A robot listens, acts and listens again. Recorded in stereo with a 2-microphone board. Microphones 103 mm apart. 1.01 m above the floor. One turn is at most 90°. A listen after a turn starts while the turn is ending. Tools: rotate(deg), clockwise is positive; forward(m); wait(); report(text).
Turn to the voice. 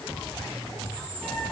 wait()
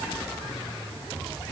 wait()
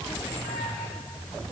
report("I can't make out anyone speaking to turn to.")